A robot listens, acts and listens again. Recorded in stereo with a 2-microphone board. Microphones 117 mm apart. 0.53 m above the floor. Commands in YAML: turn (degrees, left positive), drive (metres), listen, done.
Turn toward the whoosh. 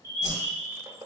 turn: -90
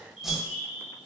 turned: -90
done: "Facing the whoosh, under 1 m away."